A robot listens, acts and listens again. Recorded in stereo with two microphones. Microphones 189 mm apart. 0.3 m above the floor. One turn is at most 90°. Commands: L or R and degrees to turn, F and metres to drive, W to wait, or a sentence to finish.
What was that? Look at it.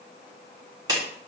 R20
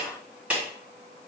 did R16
Facing the clap, 2 to 4 m away.